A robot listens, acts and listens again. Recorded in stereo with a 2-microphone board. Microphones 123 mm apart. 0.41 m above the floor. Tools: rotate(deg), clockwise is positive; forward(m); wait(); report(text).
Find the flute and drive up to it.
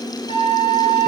rotate(-50)
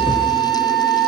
forward(1.0)
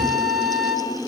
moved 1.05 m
forward(1.0)
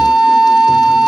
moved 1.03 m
forward(1.0)
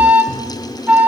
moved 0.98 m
rotate(15)
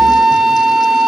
forward(1.0)
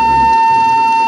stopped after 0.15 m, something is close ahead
report("Arrived at the flute, straight ahead.")